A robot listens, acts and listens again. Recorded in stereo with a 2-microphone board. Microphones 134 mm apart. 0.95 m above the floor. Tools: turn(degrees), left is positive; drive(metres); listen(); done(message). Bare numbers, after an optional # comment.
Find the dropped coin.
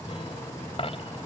# The dropped coin: about 45° left or 135° left.
turn(45)
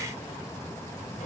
listen()
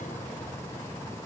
done("I heard a dropped coin, but can't make it out now. It was about straight ahead or 90° left.")